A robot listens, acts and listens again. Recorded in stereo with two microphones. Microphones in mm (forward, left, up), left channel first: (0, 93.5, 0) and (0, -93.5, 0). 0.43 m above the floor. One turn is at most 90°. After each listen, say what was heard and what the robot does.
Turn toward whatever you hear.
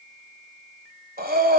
The breathing: about 55° right or 125° right. Turn 55° right.
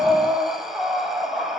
Found it: breathing, straight ahead.